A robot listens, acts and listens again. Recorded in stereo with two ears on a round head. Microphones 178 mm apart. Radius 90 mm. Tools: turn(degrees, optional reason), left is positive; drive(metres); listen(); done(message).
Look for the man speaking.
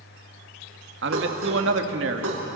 turn(degrees=-65, reason="The man speaking: about 65° right or 115° right.")
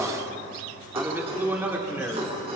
turn(degrees=-10, reason="So it is at 10° right.")
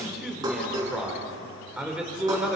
done("Facing the man speaking, 2 to 4 m away.")